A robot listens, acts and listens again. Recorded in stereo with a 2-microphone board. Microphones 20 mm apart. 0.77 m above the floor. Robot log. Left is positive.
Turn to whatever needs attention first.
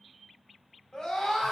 note: The scream: about 35° left or 145° left.
cmd yaw +35
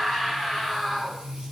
end: Found it: a scream, straight ahead.